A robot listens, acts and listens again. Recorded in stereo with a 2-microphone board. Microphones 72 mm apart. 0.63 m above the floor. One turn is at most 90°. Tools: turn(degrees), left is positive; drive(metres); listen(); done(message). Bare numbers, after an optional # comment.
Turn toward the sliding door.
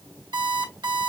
listen()
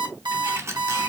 # The sliding door: about 40° right or 140° right.
turn(-40)
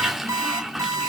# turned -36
done("Found it: a sliding door, straight ahead, 1 to 2 m away.")